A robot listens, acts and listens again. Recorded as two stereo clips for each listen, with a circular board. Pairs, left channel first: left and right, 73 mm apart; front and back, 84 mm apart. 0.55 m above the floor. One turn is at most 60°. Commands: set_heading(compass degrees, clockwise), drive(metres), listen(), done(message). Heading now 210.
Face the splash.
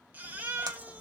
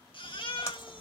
set_heading(270)
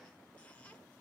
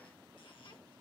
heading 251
set_heading(266)
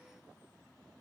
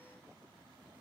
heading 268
done("Facing where the splash came from. I can't hear it now.")